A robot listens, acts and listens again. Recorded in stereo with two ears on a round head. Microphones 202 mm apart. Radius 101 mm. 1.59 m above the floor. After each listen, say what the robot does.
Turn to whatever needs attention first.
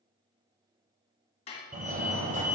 Turn 35° right.
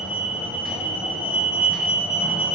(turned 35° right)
Found it: a fire alarm, straight ahead, under 1 m away.